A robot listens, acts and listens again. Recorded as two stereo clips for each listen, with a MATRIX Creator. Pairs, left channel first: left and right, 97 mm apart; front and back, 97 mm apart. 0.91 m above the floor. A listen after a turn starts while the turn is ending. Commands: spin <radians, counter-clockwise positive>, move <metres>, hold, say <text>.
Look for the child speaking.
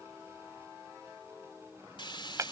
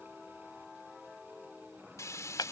hold
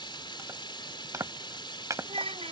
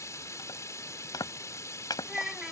spin -1.66
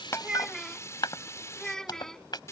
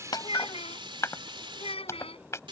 say Found it: a child speaking, straight ahead.